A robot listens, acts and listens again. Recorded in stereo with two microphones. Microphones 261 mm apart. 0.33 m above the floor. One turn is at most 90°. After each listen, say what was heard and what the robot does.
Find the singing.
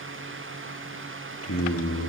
The singing: about 60° left or 120° left. Turn 60° left.
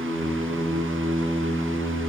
So it is at 10° right. Turn 10° right.
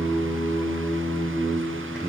Found it: singing, straight ahead.